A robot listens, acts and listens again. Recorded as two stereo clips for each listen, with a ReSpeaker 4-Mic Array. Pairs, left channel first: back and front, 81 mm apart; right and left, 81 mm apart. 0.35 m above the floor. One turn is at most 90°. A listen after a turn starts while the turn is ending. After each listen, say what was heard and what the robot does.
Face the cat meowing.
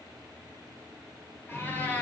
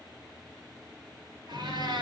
The cat meowing: 110° left. Turn 90° left.
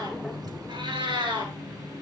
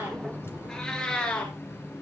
The cat meowing is now 15° right. Turn 15° right.
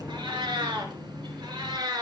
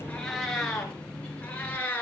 The cat meowing is now 20° right. Turn 20° right.
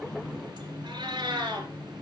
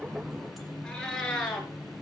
The cat meowing is now 10° right. Turn 10° right.
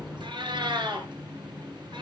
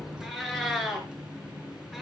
Facing the cat meowing, 2 to 4 m away.